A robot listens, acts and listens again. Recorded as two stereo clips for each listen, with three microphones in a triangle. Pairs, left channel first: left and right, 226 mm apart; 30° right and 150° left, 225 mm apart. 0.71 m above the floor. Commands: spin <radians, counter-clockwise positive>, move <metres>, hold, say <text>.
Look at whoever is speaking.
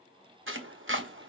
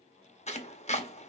hold
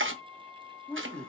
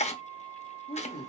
say Facing the woman speaking, 1 to 2 m away.